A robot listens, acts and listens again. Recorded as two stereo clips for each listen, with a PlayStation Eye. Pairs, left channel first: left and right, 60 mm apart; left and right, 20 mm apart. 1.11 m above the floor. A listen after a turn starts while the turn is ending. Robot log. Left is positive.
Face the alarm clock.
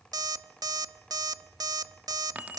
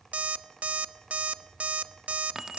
cmd yaw -90
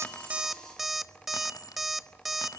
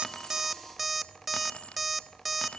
end: Facing the alarm clock, under 1 m away.